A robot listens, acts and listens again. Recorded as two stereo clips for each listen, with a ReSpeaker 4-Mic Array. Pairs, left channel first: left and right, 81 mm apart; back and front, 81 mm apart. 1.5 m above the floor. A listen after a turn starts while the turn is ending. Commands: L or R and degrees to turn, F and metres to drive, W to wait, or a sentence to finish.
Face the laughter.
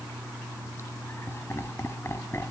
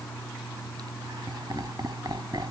L35
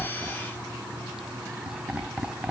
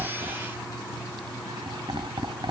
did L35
R10
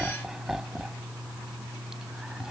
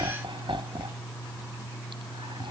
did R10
Facing the laughter.